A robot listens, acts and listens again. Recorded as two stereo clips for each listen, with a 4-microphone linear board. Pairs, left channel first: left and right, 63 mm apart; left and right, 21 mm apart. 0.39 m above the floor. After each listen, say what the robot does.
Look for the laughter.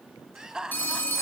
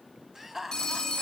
Turn 30° right.
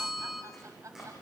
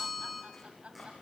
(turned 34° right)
Turn 125° right.
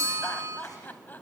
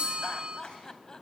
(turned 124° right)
Turn 30° left.
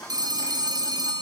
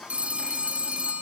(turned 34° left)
Keep listening.
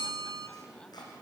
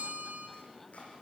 Keep listening.
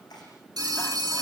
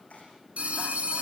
Facing where the laughter came from. I can't hear it now.